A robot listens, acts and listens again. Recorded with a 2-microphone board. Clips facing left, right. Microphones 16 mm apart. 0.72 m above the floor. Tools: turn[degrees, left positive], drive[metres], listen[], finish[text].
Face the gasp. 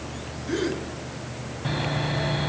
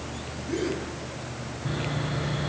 Thought: The gasp: about 55° left or 125° left.
Action: turn[55]
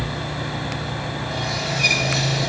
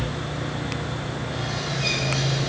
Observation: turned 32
Action: listen[]
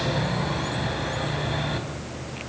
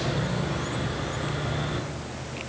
Action: finish[I heard a gasp, but can't make it out now. It was about 20° left or 95° left.]